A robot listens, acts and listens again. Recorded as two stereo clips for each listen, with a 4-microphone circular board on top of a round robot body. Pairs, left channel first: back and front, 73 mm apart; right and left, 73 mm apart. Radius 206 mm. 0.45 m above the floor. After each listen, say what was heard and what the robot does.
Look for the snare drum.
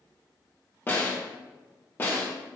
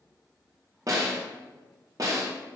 The snare drum: 125° left. Turn 125° left.
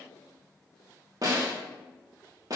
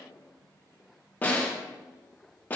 The snare drum is now 25° right. Turn 25° right.
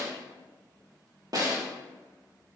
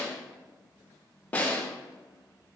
The snare drum is now 20° right. Turn 20° right.
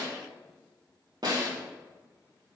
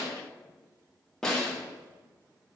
Found it: a snare drum, straight ahead, 2 to 4 m away.